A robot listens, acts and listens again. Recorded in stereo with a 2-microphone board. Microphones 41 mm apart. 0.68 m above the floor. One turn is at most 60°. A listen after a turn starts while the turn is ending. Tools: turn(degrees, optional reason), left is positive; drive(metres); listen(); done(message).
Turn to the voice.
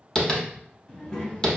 turn(degrees=15, reason="The child speaking: about 15° left or 165° left.")
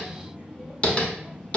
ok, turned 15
done("Found it: a child speaking, straight ahead, 1 to 2 m away.")